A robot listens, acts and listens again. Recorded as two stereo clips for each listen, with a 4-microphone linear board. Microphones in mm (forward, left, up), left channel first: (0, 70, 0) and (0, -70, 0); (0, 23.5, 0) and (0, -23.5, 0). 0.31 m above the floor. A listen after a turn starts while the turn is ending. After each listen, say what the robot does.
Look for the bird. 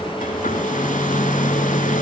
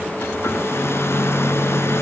Keep listening.
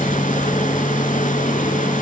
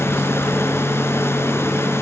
Keep listening.
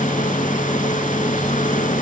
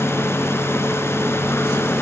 I can't make out a bird, only a hair dryer.